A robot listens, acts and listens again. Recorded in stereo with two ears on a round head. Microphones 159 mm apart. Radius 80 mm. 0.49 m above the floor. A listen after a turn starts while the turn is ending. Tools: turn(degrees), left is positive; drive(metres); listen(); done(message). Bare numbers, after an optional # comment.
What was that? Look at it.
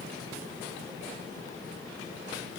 listen()
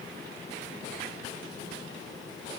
listen()
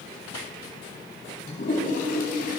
# The toilet flushing: about 50° left or 130° left.
turn(50)
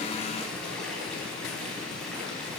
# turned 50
done("Found it: a toilet flushing, straight ahead.")